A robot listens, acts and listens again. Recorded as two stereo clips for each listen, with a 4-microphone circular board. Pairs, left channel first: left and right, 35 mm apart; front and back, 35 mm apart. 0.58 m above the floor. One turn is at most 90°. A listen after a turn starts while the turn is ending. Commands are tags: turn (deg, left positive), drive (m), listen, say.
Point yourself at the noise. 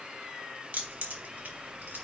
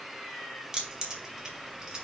<turn deg="-90"/>
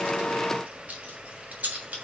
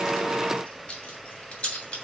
<turn deg="-45"/>
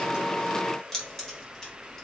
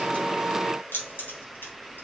<turn deg="15"/>
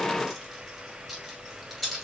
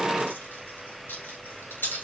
<say>Found it: keys jangling, straight ahead.</say>